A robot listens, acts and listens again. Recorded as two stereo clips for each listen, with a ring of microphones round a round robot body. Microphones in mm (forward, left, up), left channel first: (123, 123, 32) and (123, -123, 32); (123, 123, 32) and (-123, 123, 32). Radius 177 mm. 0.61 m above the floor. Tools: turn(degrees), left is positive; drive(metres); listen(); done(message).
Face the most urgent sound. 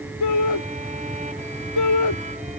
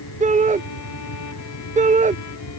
turn(degrees=120)
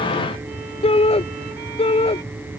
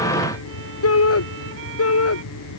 turn(degrees=25)
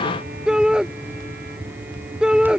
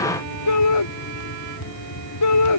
done("Found it: a shout, straight ahead.")